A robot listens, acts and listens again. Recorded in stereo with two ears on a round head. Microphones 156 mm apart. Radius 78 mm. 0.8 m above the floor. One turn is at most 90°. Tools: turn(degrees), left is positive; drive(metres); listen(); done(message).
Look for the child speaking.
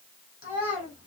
turn(degrees=50)
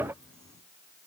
listen()
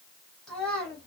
done("Facing the child speaking.")